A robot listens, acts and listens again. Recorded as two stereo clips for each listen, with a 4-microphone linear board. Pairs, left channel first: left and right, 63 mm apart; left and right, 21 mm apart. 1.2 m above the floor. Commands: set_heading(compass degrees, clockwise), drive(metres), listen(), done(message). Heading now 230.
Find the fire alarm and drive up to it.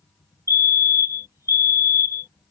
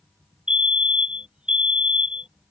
set_heading(285)
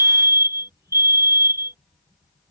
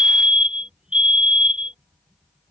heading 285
set_heading(350)
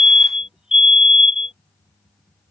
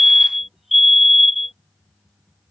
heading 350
set_heading(0)
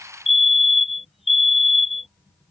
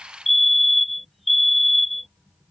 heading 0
drive(1.0)
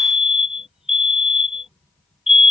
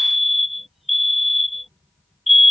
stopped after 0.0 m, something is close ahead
done("Blocked. The fire alarm is further on, straight ahead.")